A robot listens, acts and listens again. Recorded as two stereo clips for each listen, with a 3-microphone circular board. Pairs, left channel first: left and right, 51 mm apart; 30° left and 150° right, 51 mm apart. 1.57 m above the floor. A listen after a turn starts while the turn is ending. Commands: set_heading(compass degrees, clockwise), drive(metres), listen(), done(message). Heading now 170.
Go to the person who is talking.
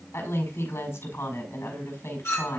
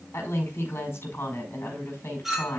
set_heading(100)
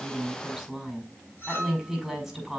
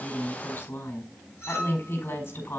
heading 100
drive(1.0)
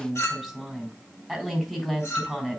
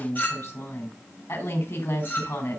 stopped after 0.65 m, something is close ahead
done("Something is in my way. I am facing the woman speaking but have not reached it.")